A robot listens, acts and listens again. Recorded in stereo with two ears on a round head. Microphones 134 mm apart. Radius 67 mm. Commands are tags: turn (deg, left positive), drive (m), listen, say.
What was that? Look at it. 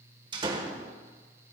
<turn deg="-35"/>
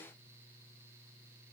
<listen/>
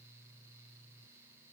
<say>I heard a door slam, but can't make it out now. It was about straight ahead or 110° right.</say>